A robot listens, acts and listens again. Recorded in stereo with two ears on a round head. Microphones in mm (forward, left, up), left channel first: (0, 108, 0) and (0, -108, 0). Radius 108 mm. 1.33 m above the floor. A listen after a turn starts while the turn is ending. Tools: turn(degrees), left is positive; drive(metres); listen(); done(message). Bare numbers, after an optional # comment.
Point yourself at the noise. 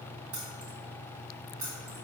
# The keys jangling: about 60° right or 120° right.
turn(-60)
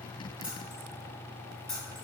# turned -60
done("Facing the keys jangling.")